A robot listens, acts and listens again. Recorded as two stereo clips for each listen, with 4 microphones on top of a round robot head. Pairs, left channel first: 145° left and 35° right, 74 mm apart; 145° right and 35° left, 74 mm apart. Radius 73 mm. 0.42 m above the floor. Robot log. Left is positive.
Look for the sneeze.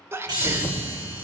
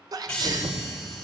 note: The sneeze: 15° left.
cmd yaw +15
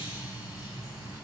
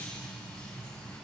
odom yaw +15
end: I heard a sneeze from this way, but can't make it out now.